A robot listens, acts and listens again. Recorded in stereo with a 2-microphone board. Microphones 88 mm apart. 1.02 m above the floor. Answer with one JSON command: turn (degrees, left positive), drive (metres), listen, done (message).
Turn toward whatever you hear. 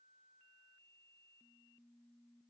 {"listen": true}
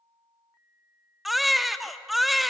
{"turn": 30}
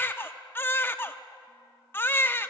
{"turn": 155}
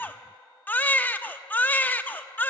{"turn": 25}
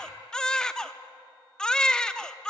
{"turn": 10}
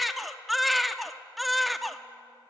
{"done": "Facing the baby crying."}